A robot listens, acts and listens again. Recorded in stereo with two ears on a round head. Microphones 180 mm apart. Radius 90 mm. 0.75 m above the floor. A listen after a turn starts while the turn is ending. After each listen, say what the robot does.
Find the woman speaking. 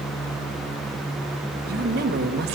Turn 55° right.
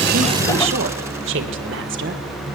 Turn 65° right.
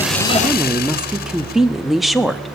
Found it: a woman speaking, straight ahead.